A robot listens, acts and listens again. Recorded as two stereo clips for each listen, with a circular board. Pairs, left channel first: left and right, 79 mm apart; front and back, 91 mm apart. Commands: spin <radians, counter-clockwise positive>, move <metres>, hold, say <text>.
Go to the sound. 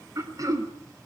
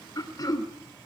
spin -0.79
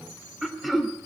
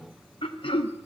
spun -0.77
move 1.0
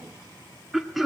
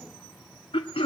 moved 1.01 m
move 1.0
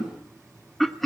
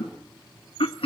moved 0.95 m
move 1.0
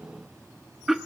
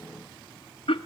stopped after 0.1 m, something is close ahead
say I am next to the throat clearing.